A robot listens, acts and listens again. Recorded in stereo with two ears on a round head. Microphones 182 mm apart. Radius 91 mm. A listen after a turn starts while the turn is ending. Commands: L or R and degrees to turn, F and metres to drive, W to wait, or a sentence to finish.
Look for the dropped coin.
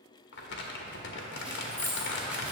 L30
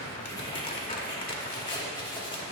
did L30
W
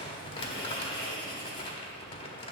I heard a dropped coin, but can't make it out now. It was about 20° right or 140° left.